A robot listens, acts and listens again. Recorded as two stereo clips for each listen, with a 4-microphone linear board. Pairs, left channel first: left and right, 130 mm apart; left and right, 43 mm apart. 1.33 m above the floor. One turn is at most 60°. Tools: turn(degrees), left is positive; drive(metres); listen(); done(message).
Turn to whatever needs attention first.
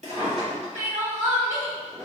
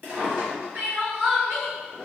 turn(degrees=-60)
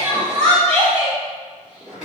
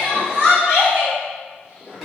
turn(degrees=-40)
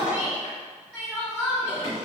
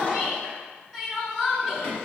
turn(degrees=-10)
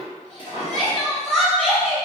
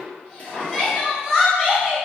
done("Found it: crying, straight ahead, 1 to 2 m away.")